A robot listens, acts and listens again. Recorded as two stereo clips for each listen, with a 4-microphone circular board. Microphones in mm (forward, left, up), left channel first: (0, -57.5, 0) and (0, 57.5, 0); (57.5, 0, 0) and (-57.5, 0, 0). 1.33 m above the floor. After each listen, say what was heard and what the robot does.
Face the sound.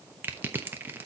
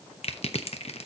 The crushing: 20° left. Turn 20° left.
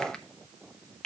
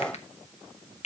Facing the crushing, under 1 m away.